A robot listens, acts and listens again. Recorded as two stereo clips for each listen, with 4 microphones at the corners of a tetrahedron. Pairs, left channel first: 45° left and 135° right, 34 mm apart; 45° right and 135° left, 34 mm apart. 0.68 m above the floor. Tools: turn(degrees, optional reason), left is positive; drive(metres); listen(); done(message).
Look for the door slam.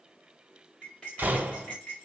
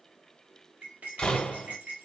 turn(degrees=-100, reason="The door slam: 100° right.")
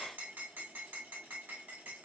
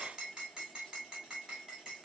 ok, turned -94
turn(degrees=-10, reason="Nothing new. It was at 10° right.")
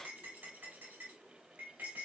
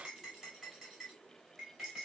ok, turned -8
done("Facing where the door slam came from. I can't hear it now.")